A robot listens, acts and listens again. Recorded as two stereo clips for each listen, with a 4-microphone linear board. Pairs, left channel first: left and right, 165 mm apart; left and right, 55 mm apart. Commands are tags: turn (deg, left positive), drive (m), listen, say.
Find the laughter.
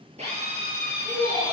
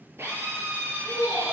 <turn deg="-30"/>
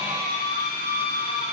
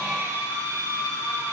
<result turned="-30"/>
<listen/>
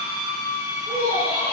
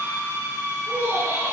<turn deg="-130"/>
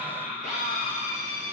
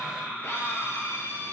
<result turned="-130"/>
<turn deg="30"/>
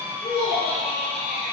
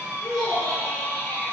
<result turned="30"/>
<turn deg="15"/>
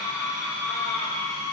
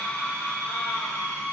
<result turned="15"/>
<listen/>
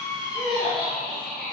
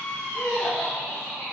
<say>Found it: laughter, straight ahead.</say>